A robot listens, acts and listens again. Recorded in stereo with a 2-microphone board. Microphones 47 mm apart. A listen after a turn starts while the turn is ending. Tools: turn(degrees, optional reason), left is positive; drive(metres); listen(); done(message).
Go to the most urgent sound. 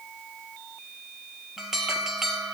turn(degrees=-30)
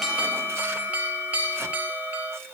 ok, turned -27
turn(degrees=-140, reason="So it is at 140° right.")
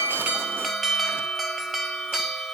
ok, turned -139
drive(metres=1.0)
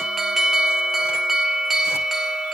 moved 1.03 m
drive(metres=1.0)
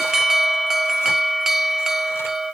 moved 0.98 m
turn(degrees=-10, reason="The alarm is now 10° right.")
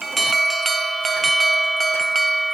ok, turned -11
drive(metres=1.0)
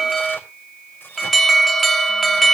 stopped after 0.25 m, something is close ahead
done("Arrived at the alarm, straight ahead.")